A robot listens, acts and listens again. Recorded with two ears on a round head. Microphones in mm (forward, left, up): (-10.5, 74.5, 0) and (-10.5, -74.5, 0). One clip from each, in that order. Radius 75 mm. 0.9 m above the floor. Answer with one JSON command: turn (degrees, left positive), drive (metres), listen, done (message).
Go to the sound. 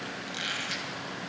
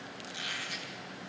{"turn": 25}
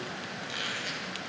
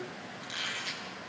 {"drive": 1.0}
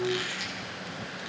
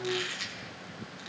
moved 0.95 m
{"drive": 1.0}
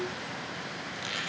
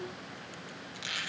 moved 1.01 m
{"turn": -10}
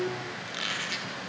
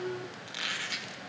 {"drive": 1.0}
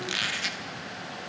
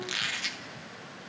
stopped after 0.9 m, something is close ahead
{"done": "I am next to the squeak."}